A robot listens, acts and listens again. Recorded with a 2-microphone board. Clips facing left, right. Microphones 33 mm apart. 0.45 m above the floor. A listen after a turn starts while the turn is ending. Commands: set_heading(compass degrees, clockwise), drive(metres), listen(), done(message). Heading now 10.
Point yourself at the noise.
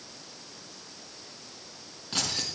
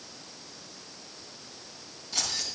set_heading(325)
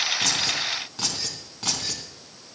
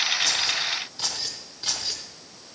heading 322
set_heading(247)
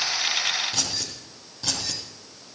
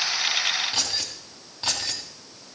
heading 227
set_heading(262)
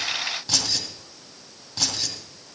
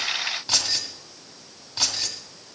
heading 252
set_heading(262)
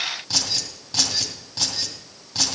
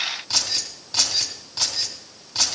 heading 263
done("Facing the keys jangling, 2 to 4 m away.")